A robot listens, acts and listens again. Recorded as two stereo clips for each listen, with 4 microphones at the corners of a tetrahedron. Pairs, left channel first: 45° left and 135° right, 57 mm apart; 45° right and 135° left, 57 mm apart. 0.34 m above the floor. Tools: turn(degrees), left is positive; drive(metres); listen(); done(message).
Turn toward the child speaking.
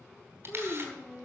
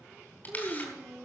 turn(degrees=105)
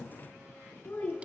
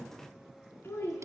done("Found it: a child speaking, straight ahead.")